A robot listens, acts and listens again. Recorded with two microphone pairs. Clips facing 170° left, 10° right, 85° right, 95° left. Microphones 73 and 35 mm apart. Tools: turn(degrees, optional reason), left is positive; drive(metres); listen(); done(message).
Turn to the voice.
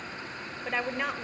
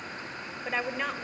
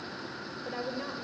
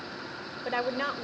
turn(degrees=85, reason="The woman speaking: 85° left.")
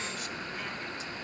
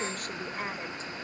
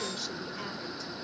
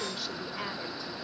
listen()
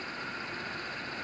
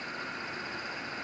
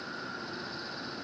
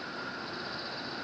listen()
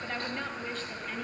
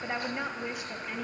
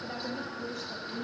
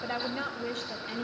turn(degrees=70, reason="The woman speaking is now 70° left.")
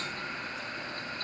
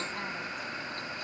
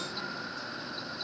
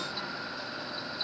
listen()
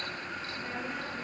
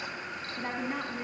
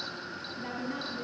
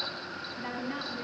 turn(degrees=25, reason="The woman speaking is now 25° left.")
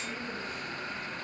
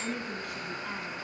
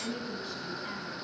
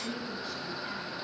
done("Facing the woman speaking.")